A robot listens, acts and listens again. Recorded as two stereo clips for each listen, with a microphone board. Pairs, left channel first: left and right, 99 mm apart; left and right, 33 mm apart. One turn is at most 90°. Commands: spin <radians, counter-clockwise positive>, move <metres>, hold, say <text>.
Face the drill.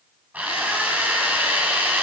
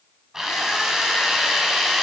spin -0.26
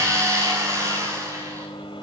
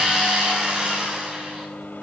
spin -1.57
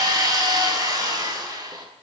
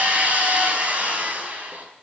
spin -0.70
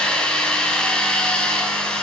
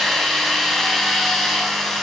spin 0.17
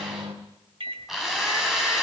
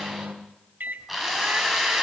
say Found it: a drill, straight ahead, over 4 m away.